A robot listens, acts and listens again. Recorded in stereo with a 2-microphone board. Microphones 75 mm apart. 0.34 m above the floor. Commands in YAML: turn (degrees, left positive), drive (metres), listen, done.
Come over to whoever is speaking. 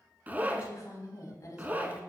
turn: 50
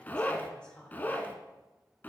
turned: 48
turn: 15
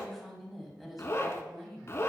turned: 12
drive: 1.0
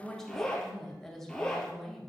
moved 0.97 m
turn: 10
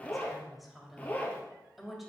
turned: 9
drive: 1.0
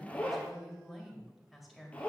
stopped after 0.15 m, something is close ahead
done: "Arrived at the woman speaking, straight ahead."